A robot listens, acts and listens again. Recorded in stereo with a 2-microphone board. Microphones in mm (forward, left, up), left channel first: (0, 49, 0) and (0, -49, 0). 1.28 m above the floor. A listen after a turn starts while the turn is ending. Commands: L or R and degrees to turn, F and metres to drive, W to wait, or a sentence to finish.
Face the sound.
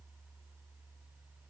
W
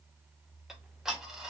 R30
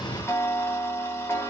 L25
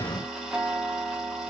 Found it: ticking, straight ahead, under 1 m away.